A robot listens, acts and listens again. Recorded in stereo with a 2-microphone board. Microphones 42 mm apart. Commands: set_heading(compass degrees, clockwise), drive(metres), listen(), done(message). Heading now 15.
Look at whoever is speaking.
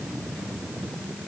listen()
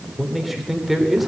set_heading(45)
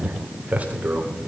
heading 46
set_heading(191)
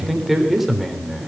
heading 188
done("Found it: a man speaking, straight ahead.")